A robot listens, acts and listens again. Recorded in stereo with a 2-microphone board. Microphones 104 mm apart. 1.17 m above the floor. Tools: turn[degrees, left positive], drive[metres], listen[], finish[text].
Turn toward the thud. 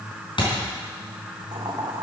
Thought: The thud: about 55° left or 125° left.
Action: turn[55]
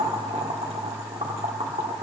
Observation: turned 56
Action: listen[]
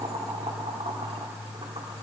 Action: finish[I heard a thud, but can't make it out now. It was about straight ahead or 70° left.]